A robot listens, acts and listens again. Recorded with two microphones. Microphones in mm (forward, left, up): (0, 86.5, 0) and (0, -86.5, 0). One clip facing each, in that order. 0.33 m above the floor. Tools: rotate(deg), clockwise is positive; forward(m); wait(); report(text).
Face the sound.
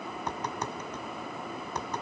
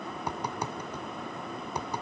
rotate(30)
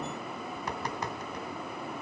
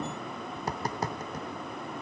rotate(140)
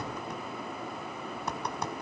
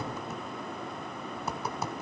report("Facing the tapping.")